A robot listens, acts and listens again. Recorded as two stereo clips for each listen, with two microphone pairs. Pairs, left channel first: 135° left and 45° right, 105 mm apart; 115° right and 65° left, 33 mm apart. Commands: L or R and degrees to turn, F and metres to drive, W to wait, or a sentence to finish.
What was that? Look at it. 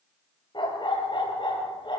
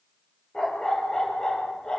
L180
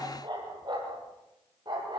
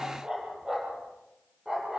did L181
Found it: a dog barking, straight ahead, over 4 m away.